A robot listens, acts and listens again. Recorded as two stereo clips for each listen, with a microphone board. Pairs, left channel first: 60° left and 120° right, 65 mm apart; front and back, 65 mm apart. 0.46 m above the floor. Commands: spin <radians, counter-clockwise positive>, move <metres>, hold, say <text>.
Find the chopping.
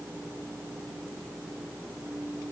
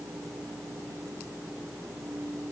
hold
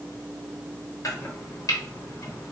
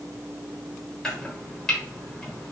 spin 1.40
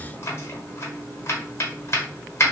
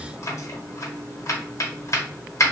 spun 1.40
spin 0.44
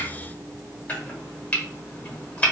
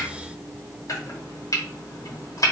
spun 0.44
say Facing the chopping.